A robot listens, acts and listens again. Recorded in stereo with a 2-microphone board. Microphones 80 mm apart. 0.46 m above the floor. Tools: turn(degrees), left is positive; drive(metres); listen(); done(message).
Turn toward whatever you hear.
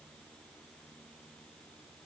listen()
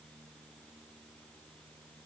listen()
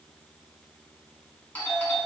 turn(degrees=20)
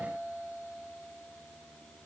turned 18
turn(degrees=145)
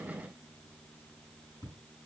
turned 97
turn(degrees=45)
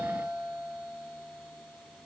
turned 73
turn(degrees=-30)
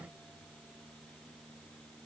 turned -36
listen()
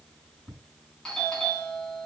done("Found it: a doorbell, straight ahead, over 4 m away.")